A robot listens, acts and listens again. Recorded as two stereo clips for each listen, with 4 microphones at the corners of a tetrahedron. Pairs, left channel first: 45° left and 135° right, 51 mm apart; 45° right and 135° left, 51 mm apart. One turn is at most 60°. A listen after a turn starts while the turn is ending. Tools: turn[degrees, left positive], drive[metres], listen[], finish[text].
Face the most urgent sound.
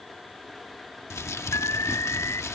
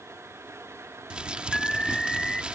Thought: The alarm: 35° left.
Action: turn[35]
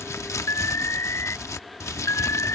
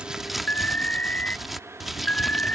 Thought: The alarm is now 20° left.
Action: turn[20]
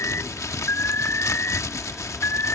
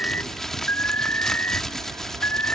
Action: finish[Facing the alarm.]